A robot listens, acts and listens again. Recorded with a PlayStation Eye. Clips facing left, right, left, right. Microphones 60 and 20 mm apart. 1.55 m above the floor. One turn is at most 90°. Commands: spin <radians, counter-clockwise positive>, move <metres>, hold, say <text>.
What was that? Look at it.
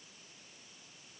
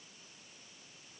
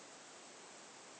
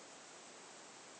hold
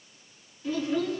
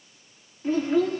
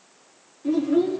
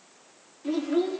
spin -0.70
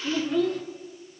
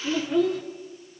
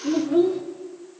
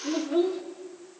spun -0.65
say Facing the child speaking, 2 to 4 m away.